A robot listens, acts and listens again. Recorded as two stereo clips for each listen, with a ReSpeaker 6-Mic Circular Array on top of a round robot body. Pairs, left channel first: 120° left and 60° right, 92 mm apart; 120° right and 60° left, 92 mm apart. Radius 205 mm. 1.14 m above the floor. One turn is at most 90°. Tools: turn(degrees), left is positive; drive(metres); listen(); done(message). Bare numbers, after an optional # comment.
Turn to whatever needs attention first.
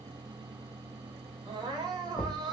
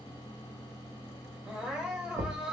# The crying: 20° right.
turn(-20)
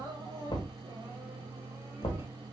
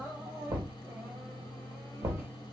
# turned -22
done("Found it: crying, straight ahead.")